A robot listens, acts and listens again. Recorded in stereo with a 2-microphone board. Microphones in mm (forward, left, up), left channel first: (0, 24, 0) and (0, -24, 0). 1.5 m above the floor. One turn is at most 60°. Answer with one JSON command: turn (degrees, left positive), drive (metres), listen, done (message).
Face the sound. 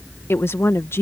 {"turn": 60}
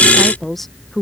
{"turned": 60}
{"done": "Facing the woman speaking."}